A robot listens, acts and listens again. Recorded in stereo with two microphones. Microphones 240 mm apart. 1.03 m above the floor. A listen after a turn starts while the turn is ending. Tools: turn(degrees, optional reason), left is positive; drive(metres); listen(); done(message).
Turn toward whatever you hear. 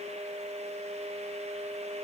listen()
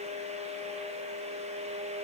listen()
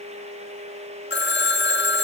turn(degrees=45, reason="The phone ringing: about 45° left or 135° left.")
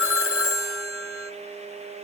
turn(degrees=85, reason="So it is at 85° left.")
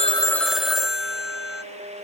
done("Found it: a phone ringing, straight ahead, under 1 m away.")